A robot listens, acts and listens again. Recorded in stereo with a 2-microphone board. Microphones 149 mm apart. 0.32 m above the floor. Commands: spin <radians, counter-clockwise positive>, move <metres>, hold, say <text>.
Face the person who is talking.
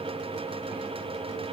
hold
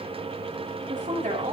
spin -1.05
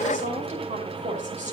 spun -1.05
spin -1.05
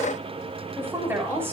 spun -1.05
spin -0.26
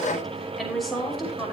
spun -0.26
say Facing the woman speaking, over 4 m away.